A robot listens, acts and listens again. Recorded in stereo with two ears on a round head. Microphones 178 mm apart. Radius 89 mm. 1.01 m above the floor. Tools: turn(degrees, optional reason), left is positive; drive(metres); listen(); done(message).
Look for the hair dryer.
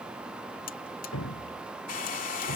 turn(degrees=45, reason="The hair dryer: about 45° left or 135° left.")
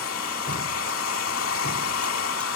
turn(degrees=90, reason="So it is at 90° left.")
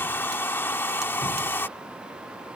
turn(degrees=10, reason="The hair dryer is now 10° left.")
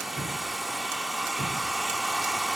done("Found it: a hair dryer, straight ahead.")